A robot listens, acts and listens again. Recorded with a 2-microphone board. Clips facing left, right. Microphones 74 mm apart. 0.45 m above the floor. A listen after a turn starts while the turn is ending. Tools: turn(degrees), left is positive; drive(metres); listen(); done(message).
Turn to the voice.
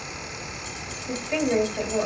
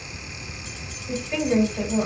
turn(degrees=25)
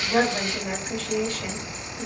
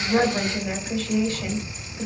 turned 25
done("Facing the woman speaking, 1 to 2 m away.")